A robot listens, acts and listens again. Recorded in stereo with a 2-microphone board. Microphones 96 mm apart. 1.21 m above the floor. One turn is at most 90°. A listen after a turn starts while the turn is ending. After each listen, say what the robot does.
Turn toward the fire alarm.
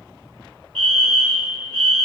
Turn 30° left.
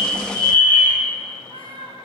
Turn 25° right.
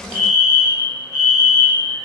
Turn 15° right.
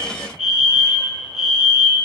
Found it: a fire alarm, straight ahead.